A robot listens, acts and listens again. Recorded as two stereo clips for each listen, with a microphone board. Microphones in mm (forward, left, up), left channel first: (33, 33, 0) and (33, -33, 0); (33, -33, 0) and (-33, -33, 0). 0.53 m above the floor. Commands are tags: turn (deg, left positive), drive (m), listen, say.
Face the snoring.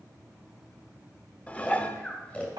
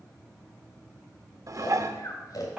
<turn deg="20"/>
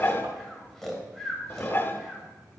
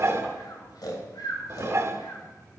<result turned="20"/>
<say>Facing the snoring.</say>